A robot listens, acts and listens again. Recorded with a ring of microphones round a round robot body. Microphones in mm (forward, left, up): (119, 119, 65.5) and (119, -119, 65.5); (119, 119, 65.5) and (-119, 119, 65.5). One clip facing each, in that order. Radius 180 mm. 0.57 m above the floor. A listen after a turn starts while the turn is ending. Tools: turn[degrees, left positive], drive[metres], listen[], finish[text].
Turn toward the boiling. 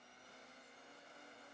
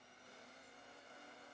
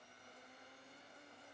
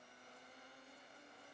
Action: listen[]
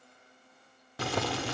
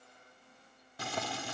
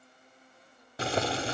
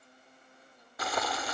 Thought: The boiling: 65° left.
Action: turn[65]
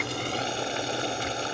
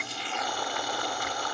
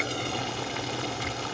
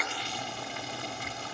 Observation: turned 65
Thought: The boiling is now 20° left.
Action: turn[20]
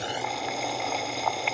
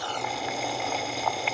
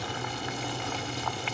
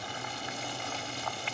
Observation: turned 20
Action: finish[Facing the boiling.]